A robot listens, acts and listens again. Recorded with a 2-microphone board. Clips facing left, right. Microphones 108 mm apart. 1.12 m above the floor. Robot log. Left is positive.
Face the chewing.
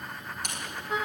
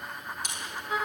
note: The chewing: about 60° left or 120° left.
cmd yaw +60
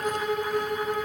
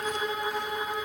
cmd idle
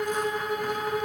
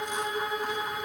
cmd idle
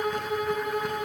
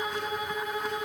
end: I heard chewing, but can't make it out now. It was about straight ahead or 60° left.